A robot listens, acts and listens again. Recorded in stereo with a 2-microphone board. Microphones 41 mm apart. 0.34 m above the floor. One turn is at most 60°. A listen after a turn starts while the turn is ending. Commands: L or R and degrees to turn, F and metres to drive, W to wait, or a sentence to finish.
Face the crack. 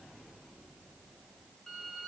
W
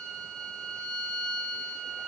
W
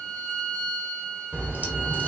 R40
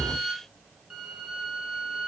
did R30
W
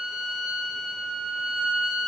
I heard a crack, but can't make it out now. It was about 10° right or 110° right.